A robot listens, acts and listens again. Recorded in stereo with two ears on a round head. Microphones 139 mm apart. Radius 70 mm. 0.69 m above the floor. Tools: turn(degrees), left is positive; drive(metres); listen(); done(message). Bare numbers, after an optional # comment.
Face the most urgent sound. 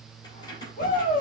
# The shout: about 60° left or 120° left.
turn(60)
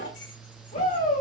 # So it is at 55° left.
turn(55)
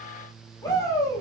# The shout is now 25° left.
turn(25)
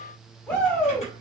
# The shout is now 10° left.
turn(10)
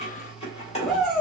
done("Found it: a shout, straight ahead.")